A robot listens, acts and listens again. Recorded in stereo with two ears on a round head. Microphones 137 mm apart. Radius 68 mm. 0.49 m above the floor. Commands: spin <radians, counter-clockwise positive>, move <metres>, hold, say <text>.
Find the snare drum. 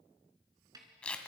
spin -0.44
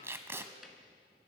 hold
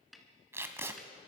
say Facing the snare drum, 2 to 4 m away.